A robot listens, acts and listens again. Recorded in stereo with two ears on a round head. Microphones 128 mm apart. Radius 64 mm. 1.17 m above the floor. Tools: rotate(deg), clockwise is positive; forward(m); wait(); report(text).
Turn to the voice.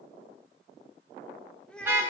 rotate(-30)
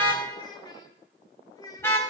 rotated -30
rotate(-150)
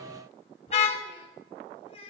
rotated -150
rotate(-45)
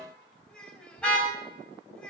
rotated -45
report("Found it: a child speaking, straight ahead, 2 to 4 m away.")